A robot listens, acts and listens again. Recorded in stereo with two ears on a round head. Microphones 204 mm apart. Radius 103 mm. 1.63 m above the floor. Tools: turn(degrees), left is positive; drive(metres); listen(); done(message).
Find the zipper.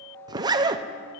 turn(degrees=-15)
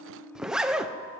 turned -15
done("Facing the zipper.")